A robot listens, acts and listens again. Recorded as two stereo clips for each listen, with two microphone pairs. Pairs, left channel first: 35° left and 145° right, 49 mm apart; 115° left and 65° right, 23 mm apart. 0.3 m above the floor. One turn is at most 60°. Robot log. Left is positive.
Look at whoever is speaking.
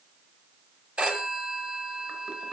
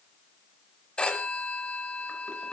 cmd idle
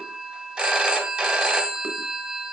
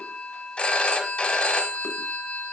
cmd idle
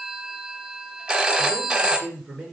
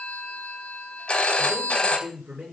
note: The man speaking: 70° right.
cmd yaw -60
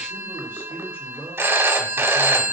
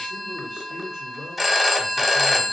end: Facing the man speaking, 2 to 4 m away.